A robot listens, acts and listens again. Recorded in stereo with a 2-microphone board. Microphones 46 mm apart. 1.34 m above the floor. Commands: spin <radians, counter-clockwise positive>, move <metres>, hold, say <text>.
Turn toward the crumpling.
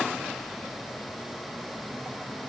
hold
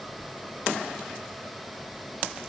hold
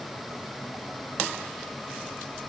say I can't make out crumpling to turn to.